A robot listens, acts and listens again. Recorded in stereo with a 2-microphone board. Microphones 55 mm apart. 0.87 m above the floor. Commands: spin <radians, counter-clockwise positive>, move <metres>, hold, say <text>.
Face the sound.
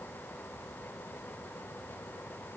hold
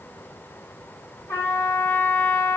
spin 1.05
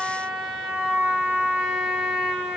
say Found it: a trumpet, straight ahead, 1 to 2 m away.